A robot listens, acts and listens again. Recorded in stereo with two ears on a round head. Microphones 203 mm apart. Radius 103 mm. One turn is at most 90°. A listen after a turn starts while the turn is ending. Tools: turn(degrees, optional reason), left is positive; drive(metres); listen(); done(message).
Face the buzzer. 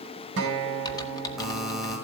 turn(degrees=30)
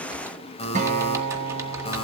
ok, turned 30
turn(degrees=90, reason="So it is at 150° left.")
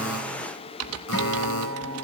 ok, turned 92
turn(degrees=60, reason="Nothing new. It was at 60° left.")
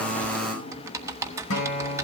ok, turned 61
done("Found it: a buzzer, straight ahead.")